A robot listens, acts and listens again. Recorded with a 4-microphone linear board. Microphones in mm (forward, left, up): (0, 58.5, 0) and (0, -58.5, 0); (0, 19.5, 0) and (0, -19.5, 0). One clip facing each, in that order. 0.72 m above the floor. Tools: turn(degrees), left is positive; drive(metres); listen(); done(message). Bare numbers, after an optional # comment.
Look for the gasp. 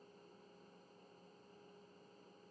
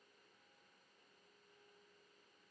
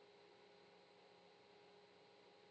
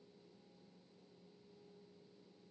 listen()
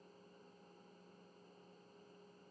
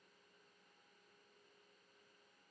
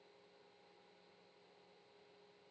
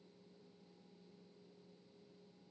listen()
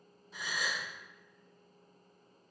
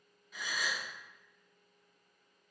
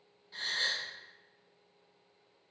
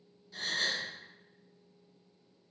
# The gasp: about 30° left or 150° left.
turn(30)
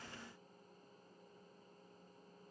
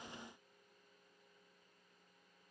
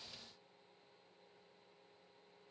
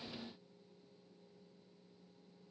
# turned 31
listen()
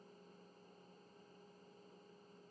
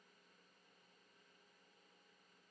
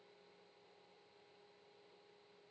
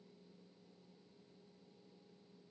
done("I heard a gasp, but can't make it out now. It was about 5° right or 120° left.")